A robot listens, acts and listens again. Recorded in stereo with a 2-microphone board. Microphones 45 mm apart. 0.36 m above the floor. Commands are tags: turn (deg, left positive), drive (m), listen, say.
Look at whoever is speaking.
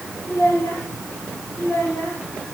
<turn deg="90"/>
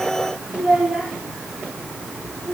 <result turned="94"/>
<say>Found it: a child speaking, straight ahead, over 4 m away.</say>